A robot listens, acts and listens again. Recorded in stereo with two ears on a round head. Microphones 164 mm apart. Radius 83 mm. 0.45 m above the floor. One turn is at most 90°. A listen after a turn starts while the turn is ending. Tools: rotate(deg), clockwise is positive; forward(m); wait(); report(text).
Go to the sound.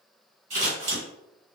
rotate(35)
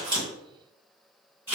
rotate(10)
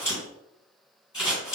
forward(1.0)
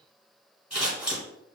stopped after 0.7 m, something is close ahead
rotate(10)
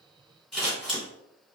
report("Arrived at the scissors, straight ahead.")